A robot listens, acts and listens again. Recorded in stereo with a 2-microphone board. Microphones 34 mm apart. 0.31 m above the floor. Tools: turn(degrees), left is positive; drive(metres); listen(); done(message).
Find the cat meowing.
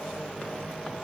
listen()
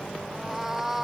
turn(degrees=-30)
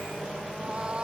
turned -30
turn(degrees=-150)
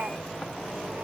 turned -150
listen()
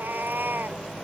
turn(degrees=-80)
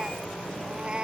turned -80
turn(degrees=-30)
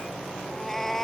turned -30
turn(degrees=10)
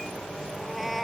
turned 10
done("Found it: a cat meowing, straight ahead.")